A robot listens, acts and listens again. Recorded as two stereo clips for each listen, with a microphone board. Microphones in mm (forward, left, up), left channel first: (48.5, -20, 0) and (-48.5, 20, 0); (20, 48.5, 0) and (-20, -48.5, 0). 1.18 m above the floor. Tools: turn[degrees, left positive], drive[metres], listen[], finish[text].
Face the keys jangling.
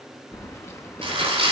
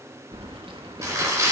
Thought: The keys jangling: 85° right.
Action: turn[-85]
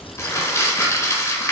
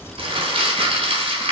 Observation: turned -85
Action: finish[Found it: keys jangling, straight ahead.]